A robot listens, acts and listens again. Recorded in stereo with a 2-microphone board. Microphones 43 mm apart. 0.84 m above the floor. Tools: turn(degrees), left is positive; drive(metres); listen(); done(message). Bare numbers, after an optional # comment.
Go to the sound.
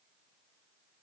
listen()
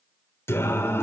turn(90)
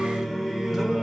# So it is at 10° right.
turn(-10)
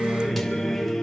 drive(1.0)
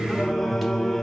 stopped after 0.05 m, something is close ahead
done("Blocked. The singing is further on, straight ahead.")